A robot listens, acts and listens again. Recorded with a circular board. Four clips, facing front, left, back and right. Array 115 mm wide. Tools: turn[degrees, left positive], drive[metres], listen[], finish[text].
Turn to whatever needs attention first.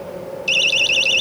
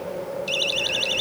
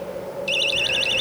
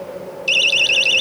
Thought: The siren: 60° right.
Action: turn[-60]
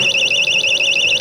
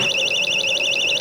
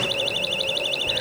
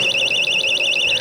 Thought: The siren is now 10° right.
Action: turn[-10]
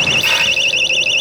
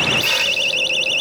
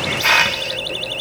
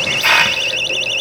Action: finish[Found it: a siren, straight ahead.]